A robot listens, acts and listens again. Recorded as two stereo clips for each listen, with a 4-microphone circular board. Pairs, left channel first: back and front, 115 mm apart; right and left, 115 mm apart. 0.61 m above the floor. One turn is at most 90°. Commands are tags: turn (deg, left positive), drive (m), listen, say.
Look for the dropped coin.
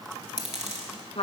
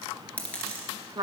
<turn deg="-10"/>
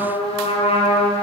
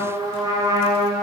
<say>Facing where the dropped coin came from. I can't hear it now.</say>